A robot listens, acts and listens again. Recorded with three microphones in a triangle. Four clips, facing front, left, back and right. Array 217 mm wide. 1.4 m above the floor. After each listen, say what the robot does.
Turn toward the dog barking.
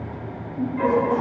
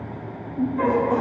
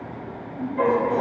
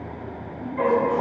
Turn 150° right.
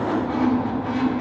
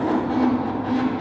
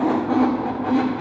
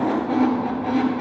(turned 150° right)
Keep listening.
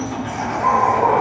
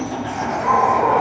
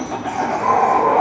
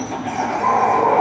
Turn 15° right.
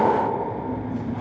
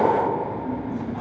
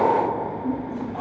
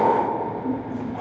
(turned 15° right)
Keep listening.
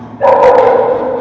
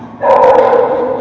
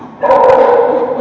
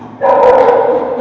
Found it: a dog barking, straight ahead.